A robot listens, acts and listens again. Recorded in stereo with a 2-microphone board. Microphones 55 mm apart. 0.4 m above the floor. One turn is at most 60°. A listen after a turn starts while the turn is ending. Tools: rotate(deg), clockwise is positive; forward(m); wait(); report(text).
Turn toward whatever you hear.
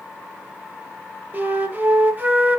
rotate(35)
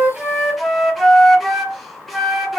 report("Found it: a flute, straight ahead, 1 to 2 m away.")